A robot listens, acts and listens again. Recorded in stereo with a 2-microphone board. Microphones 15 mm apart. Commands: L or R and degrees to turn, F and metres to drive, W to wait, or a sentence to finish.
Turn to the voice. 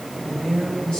L90
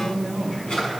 L10
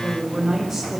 Found it: a woman speaking, straight ahead.